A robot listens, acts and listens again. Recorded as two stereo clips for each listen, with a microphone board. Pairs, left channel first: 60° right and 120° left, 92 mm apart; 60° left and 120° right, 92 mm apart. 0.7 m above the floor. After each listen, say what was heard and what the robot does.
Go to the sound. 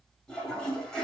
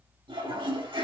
The toilet flushing: 140° right. Turn 140° right.
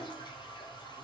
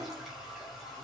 The toilet flushing is now 30° right. Turn 30° right.
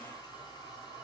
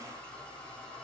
The toilet flushing is now 20° right. Turn 20° right.
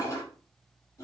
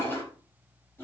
Drive 1.0 m forward.
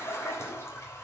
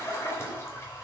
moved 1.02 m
Drive 1.0 m forward.
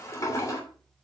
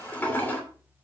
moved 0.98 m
The toilet flushing is now 10° right. Turn 10° right.
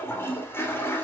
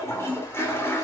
Drive 1.0 m forward.
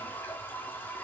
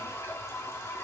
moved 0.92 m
Drive 1.0 m forward.
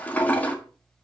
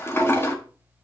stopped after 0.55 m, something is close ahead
I am next to the toilet flushing.